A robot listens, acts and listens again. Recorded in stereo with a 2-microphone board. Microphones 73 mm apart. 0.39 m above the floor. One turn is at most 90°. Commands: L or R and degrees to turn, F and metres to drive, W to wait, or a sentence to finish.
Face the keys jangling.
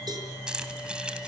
R30
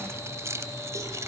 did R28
R90
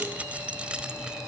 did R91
R15
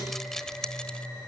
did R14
L10
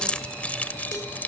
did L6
L25
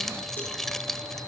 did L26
Found it: keys jangling, straight ahead, 1 to 2 m away.